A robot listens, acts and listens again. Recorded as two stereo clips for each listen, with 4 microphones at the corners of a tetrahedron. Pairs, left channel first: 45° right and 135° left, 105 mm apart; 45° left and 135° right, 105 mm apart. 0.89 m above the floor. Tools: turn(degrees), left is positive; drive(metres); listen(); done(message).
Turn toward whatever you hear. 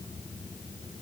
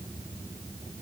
listen()
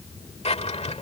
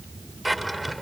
turn(degrees=-45)
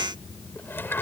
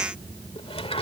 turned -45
turn(degrees=25)
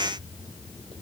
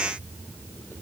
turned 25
listen()
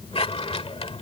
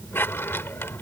turn(degrees=-20)
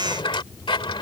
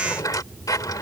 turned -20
turn(degrees=-10)
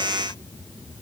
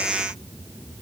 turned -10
listen()
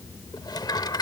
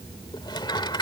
done("Found it: a drawer, straight ahead.")